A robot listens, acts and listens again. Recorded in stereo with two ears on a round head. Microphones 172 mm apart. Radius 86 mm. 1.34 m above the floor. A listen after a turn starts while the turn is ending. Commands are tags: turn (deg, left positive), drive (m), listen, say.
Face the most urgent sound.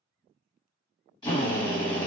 <listen/>
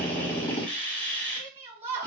<turn deg="-30"/>
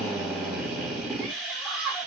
<say>Found it: a shout, straight ahead.</say>